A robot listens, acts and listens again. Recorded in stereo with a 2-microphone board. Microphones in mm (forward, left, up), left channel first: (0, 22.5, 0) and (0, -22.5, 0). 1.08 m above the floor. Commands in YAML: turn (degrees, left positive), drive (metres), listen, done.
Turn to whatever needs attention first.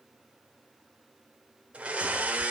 listen: true
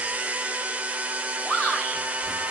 turn: 30
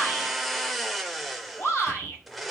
turn: 120
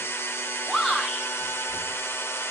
turn: 10
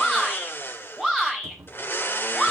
done: "Facing the shout."